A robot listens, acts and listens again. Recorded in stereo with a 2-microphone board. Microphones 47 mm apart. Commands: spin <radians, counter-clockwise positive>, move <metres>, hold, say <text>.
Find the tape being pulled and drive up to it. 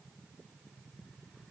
hold
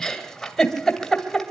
hold
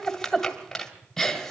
say I can't make out tape being pulled, only a giggle.